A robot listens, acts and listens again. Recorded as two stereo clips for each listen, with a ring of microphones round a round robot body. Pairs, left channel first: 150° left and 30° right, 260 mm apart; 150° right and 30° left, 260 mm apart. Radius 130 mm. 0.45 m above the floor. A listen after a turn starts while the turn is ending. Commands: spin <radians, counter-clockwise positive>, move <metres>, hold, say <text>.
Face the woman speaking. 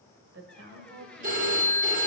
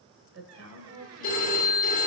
say Facing the woman speaking.